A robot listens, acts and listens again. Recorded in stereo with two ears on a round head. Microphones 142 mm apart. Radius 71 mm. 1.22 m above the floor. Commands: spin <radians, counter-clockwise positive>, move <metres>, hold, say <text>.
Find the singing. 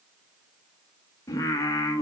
spin 0.35
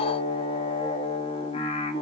spin 2.44
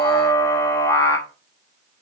spin 0.35
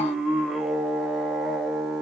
say Facing the singing.